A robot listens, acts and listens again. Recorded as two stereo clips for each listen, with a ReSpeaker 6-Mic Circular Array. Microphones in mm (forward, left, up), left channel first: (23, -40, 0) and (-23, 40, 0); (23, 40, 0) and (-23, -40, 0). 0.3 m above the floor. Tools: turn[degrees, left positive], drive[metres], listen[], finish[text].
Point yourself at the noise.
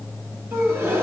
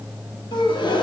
Thought: The gasp: 60° left.
Action: turn[60]
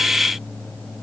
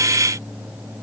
Action: finish[I heard a gasp from this way, but can't make it out now.]